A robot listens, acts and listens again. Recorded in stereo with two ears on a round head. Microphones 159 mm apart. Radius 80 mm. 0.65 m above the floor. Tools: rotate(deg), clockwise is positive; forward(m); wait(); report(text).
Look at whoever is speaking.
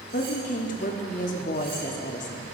rotate(-50)
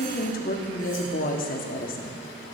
rotate(-70)
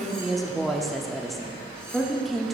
report("Found it: a woman speaking, straight ahead.")